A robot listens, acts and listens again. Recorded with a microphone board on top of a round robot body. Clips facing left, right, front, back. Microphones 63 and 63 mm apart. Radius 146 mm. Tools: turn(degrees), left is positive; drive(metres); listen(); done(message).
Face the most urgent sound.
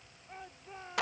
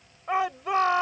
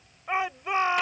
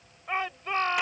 turn(degrees=-80)
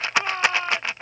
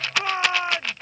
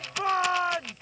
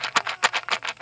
turn(degrees=-15)
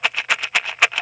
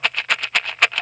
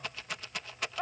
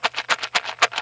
listen()
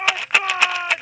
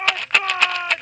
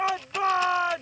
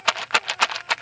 done("Found it: a shout, straight ahead.")